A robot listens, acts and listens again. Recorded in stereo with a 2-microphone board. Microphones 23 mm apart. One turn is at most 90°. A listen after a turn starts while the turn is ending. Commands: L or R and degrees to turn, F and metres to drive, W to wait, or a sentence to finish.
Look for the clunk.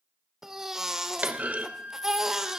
R90
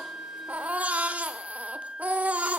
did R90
I heard a clunk from this way, but can't make it out now.